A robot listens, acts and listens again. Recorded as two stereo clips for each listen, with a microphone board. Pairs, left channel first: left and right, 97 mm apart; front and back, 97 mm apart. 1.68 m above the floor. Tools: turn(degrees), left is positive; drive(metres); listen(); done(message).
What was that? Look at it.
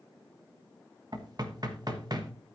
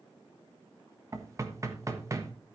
turn(degrees=-125)
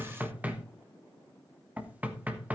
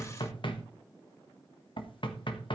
turn(degrees=-15)
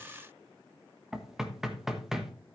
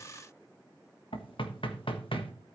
done("Found it: knocking, straight ahead.")